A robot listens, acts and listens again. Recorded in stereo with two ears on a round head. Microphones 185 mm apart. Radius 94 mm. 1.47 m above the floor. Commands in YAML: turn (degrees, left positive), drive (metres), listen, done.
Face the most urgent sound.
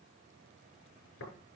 listen: true
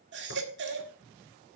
turn: -60
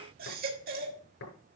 turn: -50
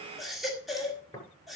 done: "Found it: a baby crying, straight ahead."